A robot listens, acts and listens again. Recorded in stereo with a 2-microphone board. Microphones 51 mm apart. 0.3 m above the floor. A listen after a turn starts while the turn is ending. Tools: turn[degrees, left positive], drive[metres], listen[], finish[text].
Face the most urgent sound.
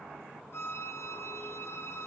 Action: listen[]
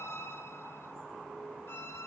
Action: listen[]
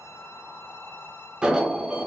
Thought: The alarm: about 15° right or 165° right.
Action: turn[-15]
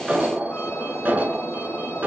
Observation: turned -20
Thought: So it is at 145° right.
Action: turn[-145]
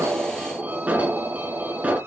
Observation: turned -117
Thought: The alarm is now 25° right.
Action: turn[-25]
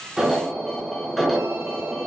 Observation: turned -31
Action: finish[Facing the alarm.]